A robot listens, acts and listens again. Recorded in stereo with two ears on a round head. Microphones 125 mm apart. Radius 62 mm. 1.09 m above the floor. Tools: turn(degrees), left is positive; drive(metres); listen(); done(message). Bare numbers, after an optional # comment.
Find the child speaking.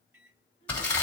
# The child speaking: about 50° left or 130° left.
turn(50)
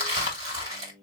listen()
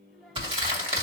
listen()
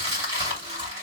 done("I heard a child speaking, but can't make it out now. It was about straight ahead or 80° left.")